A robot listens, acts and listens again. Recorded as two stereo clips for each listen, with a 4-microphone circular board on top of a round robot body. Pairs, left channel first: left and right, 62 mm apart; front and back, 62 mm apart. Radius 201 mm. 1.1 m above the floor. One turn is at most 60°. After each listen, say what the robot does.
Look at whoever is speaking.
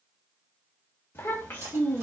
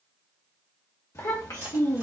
Turn 25° left.
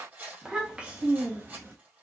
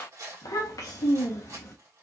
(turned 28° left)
Turn 30° right.
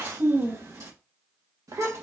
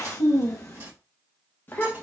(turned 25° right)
Turn 60° right.
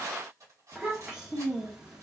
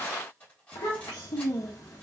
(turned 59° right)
Turn 10° right.
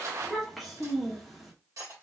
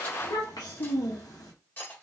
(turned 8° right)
Found it: a child speaking, straight ahead, 1 to 2 m away.